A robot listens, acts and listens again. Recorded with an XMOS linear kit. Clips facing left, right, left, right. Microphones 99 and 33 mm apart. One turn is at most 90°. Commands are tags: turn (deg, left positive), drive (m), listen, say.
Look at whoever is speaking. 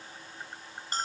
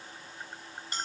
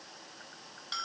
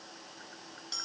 <listen/>
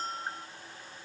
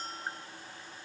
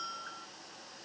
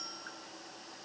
<listen/>
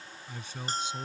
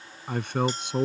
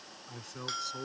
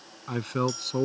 <turn deg="-65"/>
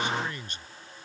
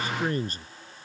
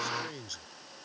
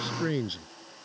<turn deg="-40"/>
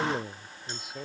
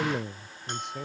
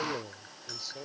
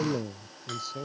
<say>Facing the man speaking.</say>